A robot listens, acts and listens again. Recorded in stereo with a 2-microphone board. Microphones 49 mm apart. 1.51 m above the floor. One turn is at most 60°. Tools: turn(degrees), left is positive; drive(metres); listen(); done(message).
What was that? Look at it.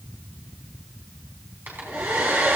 turn(degrees=-45)
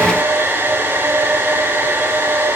turn(degrees=-60)
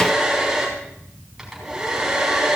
done("Facing the hair dryer.")